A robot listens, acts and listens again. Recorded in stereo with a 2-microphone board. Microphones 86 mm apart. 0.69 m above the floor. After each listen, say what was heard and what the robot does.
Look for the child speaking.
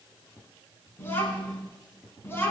The child speaking: about 25° left or 155° left. Turn 25° left.
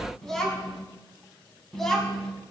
Facing the child speaking, over 4 m away.